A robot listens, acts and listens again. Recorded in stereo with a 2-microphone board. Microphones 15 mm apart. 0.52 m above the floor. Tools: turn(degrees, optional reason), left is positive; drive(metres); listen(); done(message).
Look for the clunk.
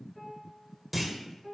turn(degrees=-30)
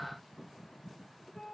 listen()
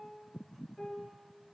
done("I heard a clunk, but can't make it out now. It was about 25° left or 145° right.")